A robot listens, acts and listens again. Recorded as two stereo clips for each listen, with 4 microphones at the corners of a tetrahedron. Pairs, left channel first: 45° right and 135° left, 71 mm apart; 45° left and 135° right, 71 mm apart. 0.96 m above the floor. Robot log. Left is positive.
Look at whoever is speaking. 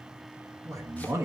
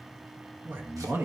note: The man speaking: 170° left.
cmd yaw +170
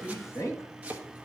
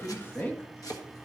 note: The man speaking is now 10° right.
cmd yaw -10
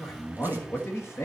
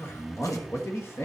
end: Facing the man speaking, 1 to 2 m away.